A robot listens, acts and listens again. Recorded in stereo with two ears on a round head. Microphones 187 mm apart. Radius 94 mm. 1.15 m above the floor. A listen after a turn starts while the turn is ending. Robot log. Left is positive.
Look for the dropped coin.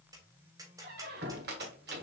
cmd idle
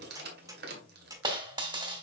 note: The dropped coin: about 25° right or 155° right.
cmd yaw -25
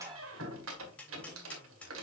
cmd idle
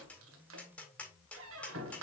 end: I heard a dropped coin, but can't make it out now. It was about straight ahead or 130° right.